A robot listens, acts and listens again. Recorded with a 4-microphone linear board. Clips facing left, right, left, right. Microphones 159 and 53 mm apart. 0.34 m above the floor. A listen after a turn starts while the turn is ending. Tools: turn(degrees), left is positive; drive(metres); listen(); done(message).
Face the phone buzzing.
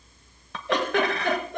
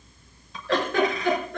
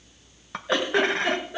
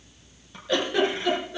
listen()
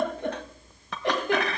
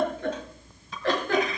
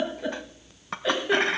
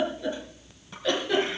listen()
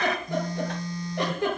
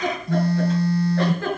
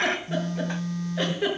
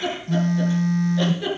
turn(degrees=-65)
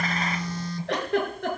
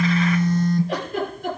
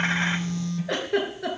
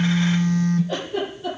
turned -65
turn(degrees=-50)
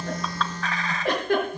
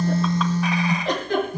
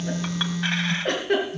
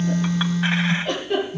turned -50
turn(degrees=-10)
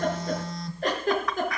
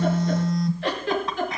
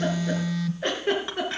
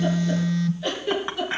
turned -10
done("Found it: a phone buzzing, straight ahead, 1 to 2 m away.")